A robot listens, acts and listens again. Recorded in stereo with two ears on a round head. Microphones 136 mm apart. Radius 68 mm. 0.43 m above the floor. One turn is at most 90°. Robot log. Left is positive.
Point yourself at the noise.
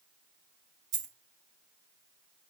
cmd yaw -90
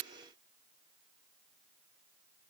end: Facing where the dropped coin came from. I can't hear it now.